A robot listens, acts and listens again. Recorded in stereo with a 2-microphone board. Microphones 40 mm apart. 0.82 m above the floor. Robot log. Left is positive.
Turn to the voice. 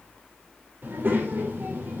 note: The child speaking: about 55° right or 125° right.
cmd yaw -55
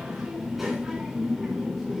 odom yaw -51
end: Facing the child speaking, 2 to 4 m away.